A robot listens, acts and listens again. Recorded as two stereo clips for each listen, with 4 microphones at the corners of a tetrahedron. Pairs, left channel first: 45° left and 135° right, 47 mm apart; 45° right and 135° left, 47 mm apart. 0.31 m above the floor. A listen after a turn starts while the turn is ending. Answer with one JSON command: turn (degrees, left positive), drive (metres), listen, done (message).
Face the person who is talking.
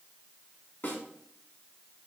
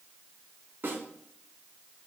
{"listen": true}
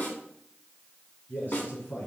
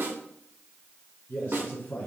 {"done": "Found it: a man speaking, straight ahead."}